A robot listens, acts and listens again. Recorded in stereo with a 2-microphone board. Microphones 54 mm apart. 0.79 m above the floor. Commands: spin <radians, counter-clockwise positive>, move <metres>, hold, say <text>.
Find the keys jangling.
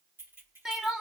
spin -0.79
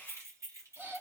spin -1.40
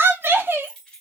spin 0.17
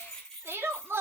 spin 0.17
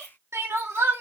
hold
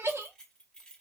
spin 0.26
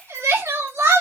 hold
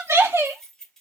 say Found it: keys jangling, straight ahead, 2 to 4 m away.